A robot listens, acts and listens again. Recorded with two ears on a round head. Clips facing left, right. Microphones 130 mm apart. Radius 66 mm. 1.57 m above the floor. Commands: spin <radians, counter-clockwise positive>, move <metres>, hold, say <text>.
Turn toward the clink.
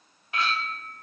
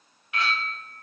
spin 0.52
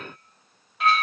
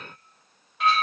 say Facing the clink.